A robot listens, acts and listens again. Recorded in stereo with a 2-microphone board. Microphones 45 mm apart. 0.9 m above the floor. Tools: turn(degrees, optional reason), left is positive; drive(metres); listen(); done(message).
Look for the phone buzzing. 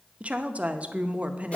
listen()
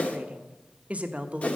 listen()
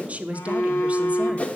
turn(degrees=90)
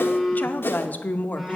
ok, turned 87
done("Facing the phone buzzing.")